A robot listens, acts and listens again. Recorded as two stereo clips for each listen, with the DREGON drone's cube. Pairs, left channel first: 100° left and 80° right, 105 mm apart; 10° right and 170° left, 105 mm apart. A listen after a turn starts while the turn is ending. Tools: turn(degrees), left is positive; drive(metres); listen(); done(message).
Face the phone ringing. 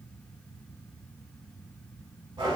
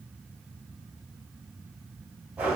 listen()
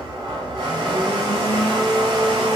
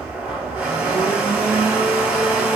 listen()
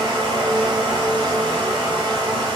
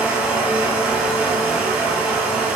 done("I can't make out a phone ringing to turn to.")